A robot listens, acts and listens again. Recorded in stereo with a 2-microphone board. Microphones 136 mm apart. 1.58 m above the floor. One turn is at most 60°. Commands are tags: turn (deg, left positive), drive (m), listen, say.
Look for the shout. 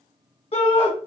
<turn deg="45"/>
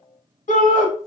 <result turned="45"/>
<turn deg="60"/>
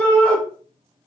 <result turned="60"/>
<turn deg="10"/>
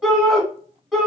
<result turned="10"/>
<say>Facing the shout.</say>